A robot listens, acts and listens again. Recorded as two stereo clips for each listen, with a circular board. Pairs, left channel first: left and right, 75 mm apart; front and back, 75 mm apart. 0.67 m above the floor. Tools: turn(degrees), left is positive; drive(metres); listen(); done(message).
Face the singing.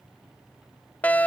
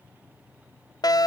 listen()
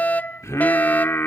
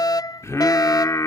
turn(degrees=35)
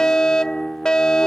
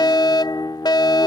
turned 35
done("Found it: singing, straight ahead.")